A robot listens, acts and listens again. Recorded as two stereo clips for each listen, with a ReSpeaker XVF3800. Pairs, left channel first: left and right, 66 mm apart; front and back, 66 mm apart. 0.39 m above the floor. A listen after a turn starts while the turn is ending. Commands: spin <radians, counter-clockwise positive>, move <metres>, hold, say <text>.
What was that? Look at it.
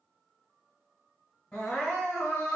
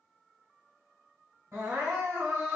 spin 2.88
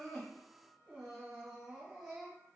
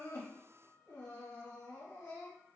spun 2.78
say Facing the crying, 1 to 2 m away.